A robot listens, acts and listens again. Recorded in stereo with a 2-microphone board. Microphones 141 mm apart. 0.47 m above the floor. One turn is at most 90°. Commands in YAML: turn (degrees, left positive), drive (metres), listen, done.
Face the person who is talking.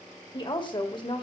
turn: 35
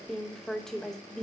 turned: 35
done: "Found it: a woman speaking, straight ahead, 1 to 2 m away."